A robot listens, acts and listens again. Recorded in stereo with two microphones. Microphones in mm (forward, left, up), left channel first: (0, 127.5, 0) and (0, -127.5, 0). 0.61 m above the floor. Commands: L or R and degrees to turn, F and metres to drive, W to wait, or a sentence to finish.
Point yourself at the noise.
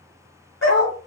L60
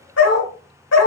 L85
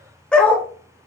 L10
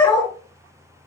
L20
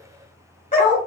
L35
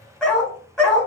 Facing the dog barking.